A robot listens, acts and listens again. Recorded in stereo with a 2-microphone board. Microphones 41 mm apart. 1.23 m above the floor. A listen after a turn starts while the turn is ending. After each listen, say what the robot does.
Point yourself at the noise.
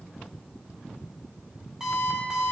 Turn 30° right.
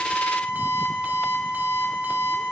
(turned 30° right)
Turn 135° right.
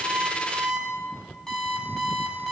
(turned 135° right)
Turn 10° left.
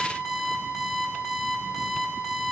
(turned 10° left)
Found it: an alarm clock, straight ahead, over 4 m away.